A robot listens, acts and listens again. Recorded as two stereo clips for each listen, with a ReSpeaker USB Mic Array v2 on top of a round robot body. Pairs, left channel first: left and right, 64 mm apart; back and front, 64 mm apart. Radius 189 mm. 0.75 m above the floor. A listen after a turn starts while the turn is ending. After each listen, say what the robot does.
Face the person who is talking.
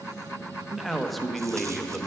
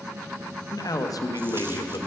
Turn 180° left.
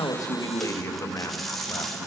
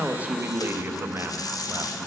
Turn 50° left.
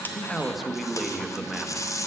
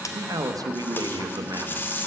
Found it: a man speaking, straight ahead.